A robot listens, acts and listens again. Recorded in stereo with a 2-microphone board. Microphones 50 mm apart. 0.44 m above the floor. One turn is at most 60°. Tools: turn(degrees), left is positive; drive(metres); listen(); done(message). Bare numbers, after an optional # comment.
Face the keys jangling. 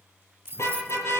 # The keys jangling: about 40° right or 140° right.
turn(-40)
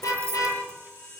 # So it is at 90° right.
turn(-60)
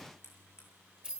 # The keys jangling is now 25° right.
turn(-25)
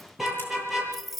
done("Facing the keys jangling, 1 to 2 m away.")